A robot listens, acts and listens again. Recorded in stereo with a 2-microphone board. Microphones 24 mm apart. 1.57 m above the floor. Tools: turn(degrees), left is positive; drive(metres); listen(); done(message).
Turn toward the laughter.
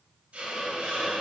listen()
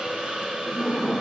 turn(degrees=30)
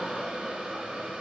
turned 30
listen()
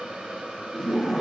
turn(degrees=-30)
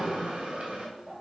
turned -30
turn(degrees=-125)
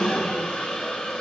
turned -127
turn(degrees=10)
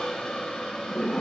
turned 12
done("Found it: laughter, straight ahead, 1 to 2 m away.")